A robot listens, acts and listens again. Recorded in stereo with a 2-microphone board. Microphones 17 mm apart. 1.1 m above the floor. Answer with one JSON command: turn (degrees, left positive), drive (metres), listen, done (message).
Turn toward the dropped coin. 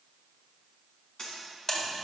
{"turn": 45}
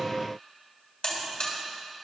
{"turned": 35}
{"listen": true}
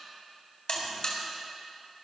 {"done": "I heard a dropped coin, but can't make it out now. It was about 10° left or 100° left."}